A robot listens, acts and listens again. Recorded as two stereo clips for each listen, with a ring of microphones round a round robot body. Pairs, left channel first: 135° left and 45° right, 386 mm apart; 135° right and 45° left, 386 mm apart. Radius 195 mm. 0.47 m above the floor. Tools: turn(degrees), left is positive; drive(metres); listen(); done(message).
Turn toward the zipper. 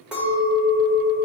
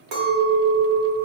listen()
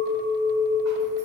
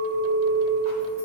listen()
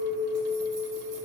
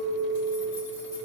done("I can't make out a zipper to turn to.")